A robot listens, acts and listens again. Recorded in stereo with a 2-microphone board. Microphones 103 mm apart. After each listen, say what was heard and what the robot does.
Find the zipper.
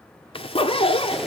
The zipper: about 60° left or 120° left. Turn 60° left.
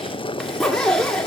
Found it: a zipper, straight ahead.